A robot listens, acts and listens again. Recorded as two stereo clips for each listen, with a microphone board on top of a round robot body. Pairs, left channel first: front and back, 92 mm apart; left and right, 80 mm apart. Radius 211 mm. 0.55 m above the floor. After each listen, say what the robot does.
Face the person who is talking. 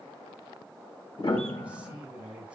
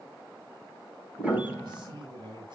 Turn 105° right.
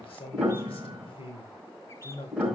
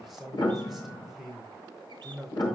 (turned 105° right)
Found it: a man speaking, straight ahead.